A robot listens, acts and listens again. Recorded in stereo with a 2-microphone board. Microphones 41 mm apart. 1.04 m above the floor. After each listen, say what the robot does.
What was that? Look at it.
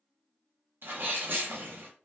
Turn 55° right.
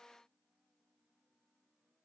Keep listening.
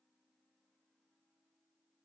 I heard a sneeze, but can't make it out now. It was about straight ahead or 70° right.